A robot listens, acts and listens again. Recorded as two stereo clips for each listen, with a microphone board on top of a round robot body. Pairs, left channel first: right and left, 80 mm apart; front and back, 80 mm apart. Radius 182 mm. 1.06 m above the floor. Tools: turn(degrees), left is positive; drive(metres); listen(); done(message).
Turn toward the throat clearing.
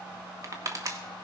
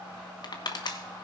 listen()
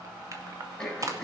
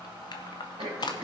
turn(degrees=-175)
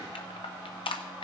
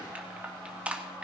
listen()
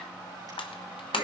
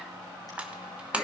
listen()
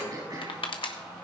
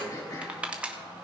turn(degrees=45)
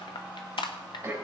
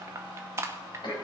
turn(degrees=25)
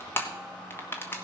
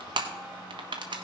listen()
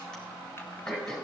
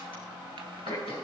turn(degrees=-10)
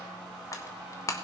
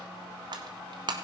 listen()
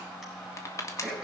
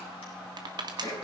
done("Found it: throat clearing, straight ahead, over 4 m away.")